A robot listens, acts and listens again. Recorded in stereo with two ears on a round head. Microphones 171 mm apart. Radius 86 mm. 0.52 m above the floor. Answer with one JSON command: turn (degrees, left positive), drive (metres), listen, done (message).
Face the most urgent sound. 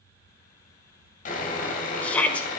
{"turn": 30}
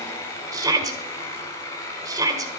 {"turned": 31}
{"turn": -20}
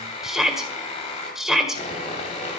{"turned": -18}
{"done": "Found it: a shout, straight ahead."}